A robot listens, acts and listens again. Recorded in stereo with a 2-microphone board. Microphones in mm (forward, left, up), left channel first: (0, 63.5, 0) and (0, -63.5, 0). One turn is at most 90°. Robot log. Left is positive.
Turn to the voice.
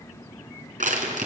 cmd idle
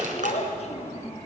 note: The child speaking: about 55° left or 125° left.
cmd yaw +55
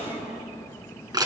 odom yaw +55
end: Found it: a child speaking, straight ahead.